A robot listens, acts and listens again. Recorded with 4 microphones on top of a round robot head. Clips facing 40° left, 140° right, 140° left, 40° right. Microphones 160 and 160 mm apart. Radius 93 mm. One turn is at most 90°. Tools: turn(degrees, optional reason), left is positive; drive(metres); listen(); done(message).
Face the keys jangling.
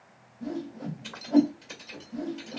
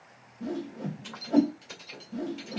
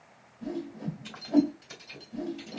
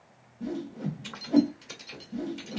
turn(degrees=-50, reason="The keys jangling: 50° right.")
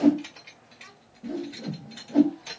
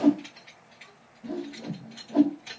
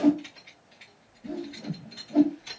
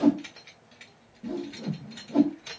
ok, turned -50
turn(degrees=-10, reason="The keys jangling is now 10° right.")
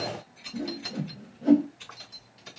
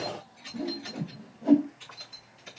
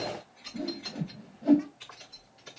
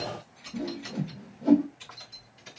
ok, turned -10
done("Found it: keys jangling, straight ahead, over 4 m away.")